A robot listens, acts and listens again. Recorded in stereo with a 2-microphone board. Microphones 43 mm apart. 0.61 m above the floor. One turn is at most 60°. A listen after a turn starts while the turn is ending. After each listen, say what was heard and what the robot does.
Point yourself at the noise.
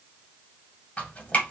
The dripping: about 35° left or 145° left. Turn 35° left.
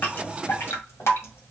So it is at 110° left. Turn 60° left.
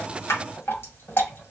The dripping is now 55° left. Turn 55° left.
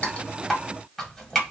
Found it: dripping, straight ahead.